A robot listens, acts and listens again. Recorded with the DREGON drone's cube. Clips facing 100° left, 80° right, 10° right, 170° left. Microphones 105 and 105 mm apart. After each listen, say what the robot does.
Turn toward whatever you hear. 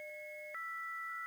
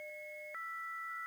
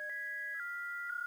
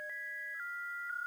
Keep listening.
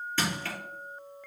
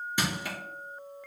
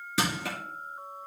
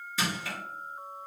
Found it: crushing, straight ahead.